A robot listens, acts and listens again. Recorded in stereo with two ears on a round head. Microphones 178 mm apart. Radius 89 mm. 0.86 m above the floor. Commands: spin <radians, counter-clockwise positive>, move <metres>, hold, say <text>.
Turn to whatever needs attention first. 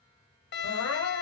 spin 1.22
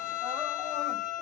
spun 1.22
hold
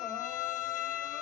hold
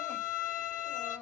say I heard crying, but can't make it out now. It was about straight ahead or 40° left.